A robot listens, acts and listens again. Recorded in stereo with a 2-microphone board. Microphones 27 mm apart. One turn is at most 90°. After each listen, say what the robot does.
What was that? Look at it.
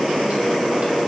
Keep listening.
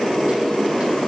Keep listening.
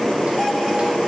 I can't make out anything.